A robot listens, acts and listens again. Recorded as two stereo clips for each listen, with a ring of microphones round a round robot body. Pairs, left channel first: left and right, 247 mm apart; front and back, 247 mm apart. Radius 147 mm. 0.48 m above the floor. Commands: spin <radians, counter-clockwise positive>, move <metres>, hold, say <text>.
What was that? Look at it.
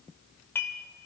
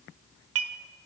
spin 2.97
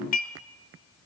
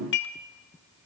spin 0.70
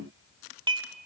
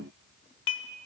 spin -0.35
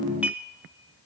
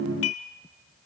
say Facing the dishes clattering, 1 to 2 m away.